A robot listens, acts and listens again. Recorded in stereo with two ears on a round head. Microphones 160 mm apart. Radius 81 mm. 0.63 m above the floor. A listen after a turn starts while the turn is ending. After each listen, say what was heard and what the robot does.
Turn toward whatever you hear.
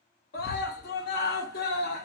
The scream: about 60° left or 120° left. Turn 60° left.
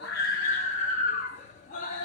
So it is at 50° left. Turn 50° left.
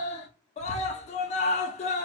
The scream is now 45° left. Turn 45° left.
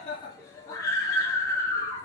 The scream is now 20° left. Turn 20° left.
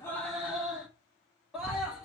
Found it: a scream, straight ahead.